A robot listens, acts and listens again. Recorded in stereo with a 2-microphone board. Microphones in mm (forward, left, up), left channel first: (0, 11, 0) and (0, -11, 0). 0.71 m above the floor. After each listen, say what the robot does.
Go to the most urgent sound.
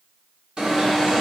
Turn 55° right.
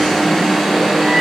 Turn 10° right.
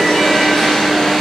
Drive 1.0 m forward.
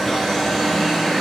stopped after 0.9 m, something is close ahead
Turn 10° left.
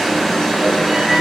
Arrived at the alarm, straight ahead.